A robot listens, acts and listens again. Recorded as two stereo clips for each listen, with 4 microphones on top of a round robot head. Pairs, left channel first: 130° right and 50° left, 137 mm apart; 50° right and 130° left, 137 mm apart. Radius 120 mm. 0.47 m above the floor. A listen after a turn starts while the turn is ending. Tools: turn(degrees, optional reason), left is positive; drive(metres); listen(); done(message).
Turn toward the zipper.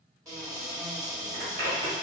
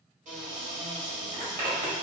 turn(degrees=75, reason="The zipper: 75° left.")
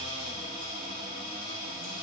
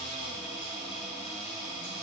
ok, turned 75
listen()
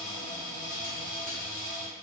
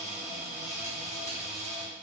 listen()
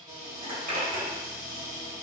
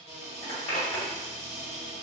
turn(degrees=20, reason="The zipper is now 20° left.")
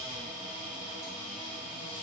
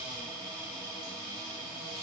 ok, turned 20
listen()
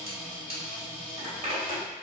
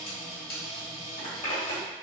done("Found it: a zipper, straight ahead, 1 to 2 m away.")